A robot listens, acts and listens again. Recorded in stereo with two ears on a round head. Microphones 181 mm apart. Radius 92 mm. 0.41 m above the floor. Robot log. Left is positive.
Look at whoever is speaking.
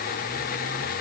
cmd idle
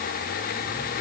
cmd idle
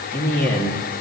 cmd yaw +30
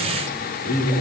note: So it is at 140° left.
cmd yaw +140
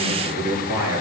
note: The man speaking is now 15° right.
cmd yaw -15
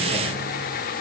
cmd idle
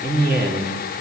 end: Found it: a man speaking, straight ahead, over 4 m away.